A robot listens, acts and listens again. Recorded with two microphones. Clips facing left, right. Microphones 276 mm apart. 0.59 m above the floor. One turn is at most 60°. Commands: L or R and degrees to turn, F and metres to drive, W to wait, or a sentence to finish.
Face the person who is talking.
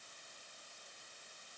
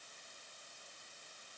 W
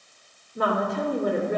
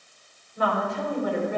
L50
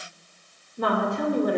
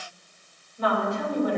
L60
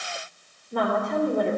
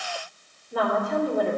Found it: a woman speaking, straight ahead, 2 to 4 m away.